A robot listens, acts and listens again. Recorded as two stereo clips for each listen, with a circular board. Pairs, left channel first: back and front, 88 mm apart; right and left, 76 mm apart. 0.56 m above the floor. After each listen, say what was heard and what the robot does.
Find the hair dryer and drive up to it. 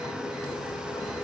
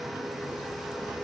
Keep listening.
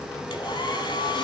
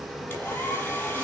The hair dryer: 160° right. Turn 160° right.
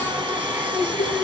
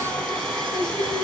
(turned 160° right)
The hair dryer is now 25° right. Turn 25° right.
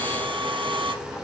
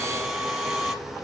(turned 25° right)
Drive 1.0 m forward.
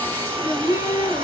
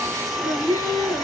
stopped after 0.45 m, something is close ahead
Blocked. The hair dryer is further on, straight ahead.